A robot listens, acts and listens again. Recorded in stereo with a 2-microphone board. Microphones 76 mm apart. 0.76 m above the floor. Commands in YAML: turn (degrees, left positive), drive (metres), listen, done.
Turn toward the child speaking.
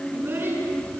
turn: -30
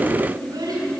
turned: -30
turn: -115
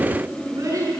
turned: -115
turn: -45
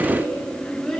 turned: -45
turn: 10
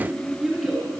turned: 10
done: "Facing the child speaking, over 4 m away."